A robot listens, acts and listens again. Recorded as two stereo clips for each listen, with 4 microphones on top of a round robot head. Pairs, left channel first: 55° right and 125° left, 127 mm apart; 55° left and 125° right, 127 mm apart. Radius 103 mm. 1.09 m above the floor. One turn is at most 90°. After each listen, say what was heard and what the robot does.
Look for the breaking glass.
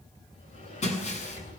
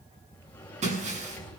The breaking glass: 90° right. Turn 90° right.
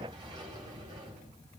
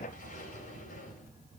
Facing where the breaking glass came from. I can't hear it now.